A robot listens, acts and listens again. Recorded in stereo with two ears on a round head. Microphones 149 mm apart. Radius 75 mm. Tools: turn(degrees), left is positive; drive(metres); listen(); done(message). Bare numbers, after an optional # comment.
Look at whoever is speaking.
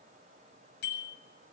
listen()
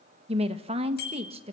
# The woman speaking: about 35° right or 145° right.
turn(-35)
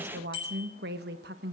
# So it is at 105° right.
turn(-105)
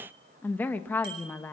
# The woman speaking is now 10° left.
turn(10)
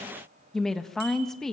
done("Facing the woman speaking, 1 to 2 m away.")